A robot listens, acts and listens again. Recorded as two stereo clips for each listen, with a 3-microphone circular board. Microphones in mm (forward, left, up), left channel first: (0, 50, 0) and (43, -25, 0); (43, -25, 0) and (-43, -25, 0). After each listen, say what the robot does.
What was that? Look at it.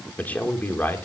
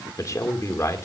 Turn 55° left.
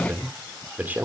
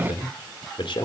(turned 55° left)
Turn 10° left.
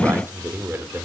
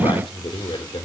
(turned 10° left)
Found it: a man speaking, straight ahead, 2 to 4 m away.